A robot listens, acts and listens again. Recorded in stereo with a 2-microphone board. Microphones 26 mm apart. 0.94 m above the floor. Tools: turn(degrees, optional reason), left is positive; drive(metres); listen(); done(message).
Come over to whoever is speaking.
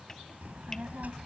turn(degrees=-65, reason="The child speaking: about 65° right or 115° right.")
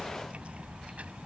turn(degrees=-50, reason="So it is at 50° right.")
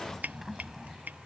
turn(degrees=-10, reason="The child speaking is now 10° right.")
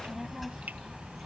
drive(metres=1.0)
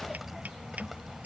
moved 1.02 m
drive(metres=1.0)
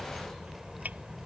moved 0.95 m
drive(metres=1.0)
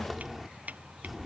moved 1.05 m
drive(metres=1.0)
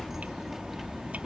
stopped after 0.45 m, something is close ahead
turn(degrees=-10, reason="The child speaking is now 10° right.")
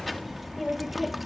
done("I am next to the child speaking.")